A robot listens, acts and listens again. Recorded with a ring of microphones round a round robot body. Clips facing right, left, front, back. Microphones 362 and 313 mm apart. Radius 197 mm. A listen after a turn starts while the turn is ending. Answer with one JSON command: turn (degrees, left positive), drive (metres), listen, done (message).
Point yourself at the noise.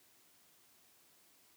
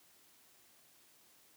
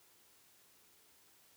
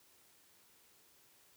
{"listen": true}
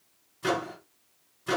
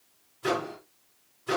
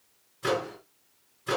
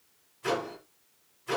{"turn": -40}
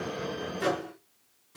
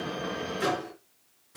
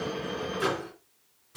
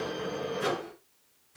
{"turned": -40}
{"done": "Facing the microwave."}